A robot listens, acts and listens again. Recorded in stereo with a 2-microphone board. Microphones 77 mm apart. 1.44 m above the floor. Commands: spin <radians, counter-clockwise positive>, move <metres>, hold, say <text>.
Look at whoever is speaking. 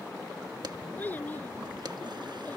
spin 0.35
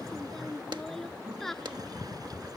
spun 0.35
say Facing the child speaking.